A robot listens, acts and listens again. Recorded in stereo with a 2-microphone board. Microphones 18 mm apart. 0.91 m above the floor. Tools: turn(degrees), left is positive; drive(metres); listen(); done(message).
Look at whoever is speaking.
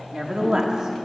turn(degrees=-50)
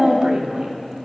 turn(degrees=-75)
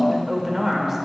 turn(degrees=-25)
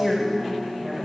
done("Facing the woman speaking.")